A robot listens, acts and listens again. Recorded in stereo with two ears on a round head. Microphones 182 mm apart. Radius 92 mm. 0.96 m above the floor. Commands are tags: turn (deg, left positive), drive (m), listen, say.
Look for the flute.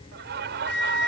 <turn deg="55"/>
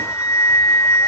<turn deg="15"/>
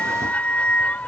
<say>Found it: a flute, straight ahead.</say>